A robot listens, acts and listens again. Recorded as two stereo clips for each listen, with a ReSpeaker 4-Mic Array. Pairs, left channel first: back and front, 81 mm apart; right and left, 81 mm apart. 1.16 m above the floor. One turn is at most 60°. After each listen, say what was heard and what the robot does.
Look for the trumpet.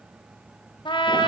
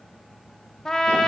The trumpet: 175° right. Turn 60° right.
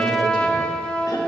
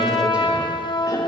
The trumpet is now 105° right. Turn 60° right.
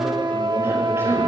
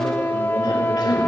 The trumpet is now 25° right. Turn 25° right.
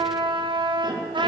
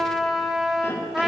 Found it: a trumpet, straight ahead, under 1 m away.